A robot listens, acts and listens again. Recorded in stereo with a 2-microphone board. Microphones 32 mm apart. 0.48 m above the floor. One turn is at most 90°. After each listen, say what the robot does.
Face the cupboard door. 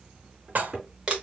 Turn 20° right.
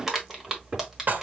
Turn 90° right.
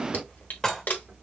Turn 50° right.
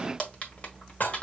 Keep listening.
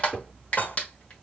Turn 15° left.
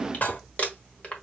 Keep listening.
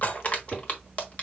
Facing the cupboard door.